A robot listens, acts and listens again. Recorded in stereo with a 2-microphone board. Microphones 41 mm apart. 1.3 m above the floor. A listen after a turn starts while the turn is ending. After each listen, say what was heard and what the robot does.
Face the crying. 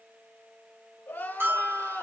The crying: about 55° left or 125° left. Turn 55° left.
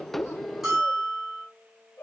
So it is at 70° left. Turn 70° left.
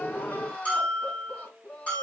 The crying is now 30° left. Turn 30° left.
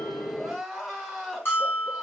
Found it: crying, straight ahead.